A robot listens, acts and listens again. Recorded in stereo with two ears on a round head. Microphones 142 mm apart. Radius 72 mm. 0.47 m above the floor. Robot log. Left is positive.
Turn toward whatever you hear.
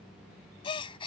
note: The gasp: about 35° left or 145° left.
cmd yaw +35
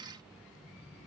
cmd idle
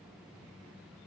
end: I heard a gasp, but can't make it out now. It was about straight ahead or 110° left.